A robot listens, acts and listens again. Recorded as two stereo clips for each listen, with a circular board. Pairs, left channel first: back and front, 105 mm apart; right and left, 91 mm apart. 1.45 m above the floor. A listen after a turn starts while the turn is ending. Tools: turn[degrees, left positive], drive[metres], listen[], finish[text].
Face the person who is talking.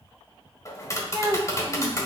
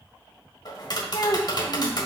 Thought: The child speaking: 50° right.
Action: turn[-50]
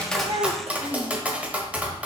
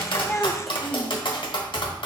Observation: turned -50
Action: listen[]
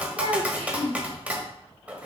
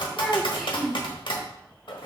Action: finish[Facing the child speaking.]